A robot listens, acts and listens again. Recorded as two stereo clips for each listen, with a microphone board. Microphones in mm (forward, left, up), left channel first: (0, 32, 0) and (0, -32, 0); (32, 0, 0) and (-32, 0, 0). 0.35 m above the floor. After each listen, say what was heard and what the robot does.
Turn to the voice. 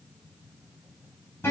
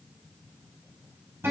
Keep listening.
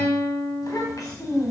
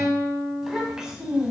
The child speaking: 105° left. Turn 105° left.
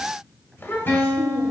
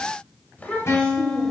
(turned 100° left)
The child speaking is now 60° left. Turn 60° left.
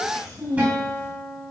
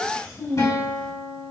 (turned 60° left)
The child speaking is now 50° left. Turn 50° left.
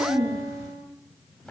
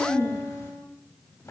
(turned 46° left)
Found it: a child speaking, straight ahead.